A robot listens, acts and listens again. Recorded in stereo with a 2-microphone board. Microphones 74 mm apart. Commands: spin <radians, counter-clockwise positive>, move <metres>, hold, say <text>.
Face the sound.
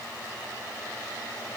hold
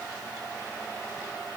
hold
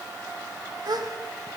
spin -1.22
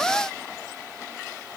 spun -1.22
hold
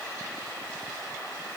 say I heard a gasp, but can't make it out now. It was about straight ahead or 40° right.